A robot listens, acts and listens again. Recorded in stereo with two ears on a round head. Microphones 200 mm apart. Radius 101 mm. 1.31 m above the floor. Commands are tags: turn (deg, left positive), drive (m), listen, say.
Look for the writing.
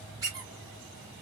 <listen/>
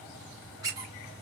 <listen/>
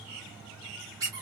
<say>I can't make out writing, only a squeak.</say>